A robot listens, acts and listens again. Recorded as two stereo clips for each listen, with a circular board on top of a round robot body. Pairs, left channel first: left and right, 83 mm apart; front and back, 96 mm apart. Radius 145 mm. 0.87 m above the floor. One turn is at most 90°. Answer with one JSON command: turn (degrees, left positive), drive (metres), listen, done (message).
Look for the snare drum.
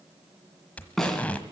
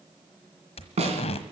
{"turn": 90}
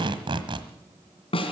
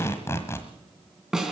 {"turn": 90}
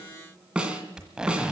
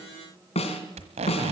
{"turn": -10}
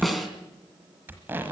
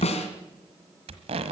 {"done": "Facing the snare drum."}